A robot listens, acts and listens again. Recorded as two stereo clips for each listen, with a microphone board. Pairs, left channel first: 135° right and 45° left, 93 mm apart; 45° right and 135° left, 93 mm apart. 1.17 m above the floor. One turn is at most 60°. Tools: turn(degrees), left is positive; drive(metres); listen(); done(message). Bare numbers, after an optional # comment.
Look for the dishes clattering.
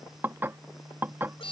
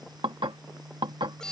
# The dishes clattering: 110° left.
turn(60)
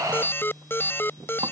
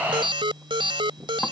# Nothing new. It was at 50° left.
turn(50)
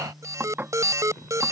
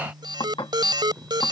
# The dishes clattering is now 25° right.
turn(-25)
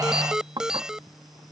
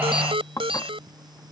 done("Facing the dishes clattering.")